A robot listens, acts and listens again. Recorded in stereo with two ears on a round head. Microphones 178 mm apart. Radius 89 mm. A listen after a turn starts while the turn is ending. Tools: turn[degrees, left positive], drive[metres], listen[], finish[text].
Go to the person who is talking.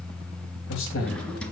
Thought: The man speaking: about 70° left or 110° left.
Action: turn[70]
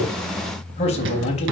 Thought: So it is at 35° left.
Action: turn[35]
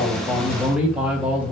Action: drive[1.0]
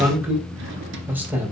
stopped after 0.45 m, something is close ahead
Thought: The man speaking is now 10° right.
Action: turn[-10]
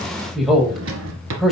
Action: finish[Something is in my way. I am facing the man speaking but have not reached it.]